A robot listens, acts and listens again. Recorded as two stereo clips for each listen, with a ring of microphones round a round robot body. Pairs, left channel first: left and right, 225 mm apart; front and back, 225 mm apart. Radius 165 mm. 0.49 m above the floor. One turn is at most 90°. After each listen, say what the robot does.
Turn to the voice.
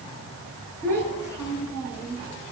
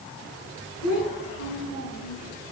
Turn 15° left.
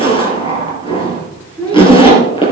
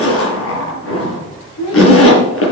Facing the child speaking.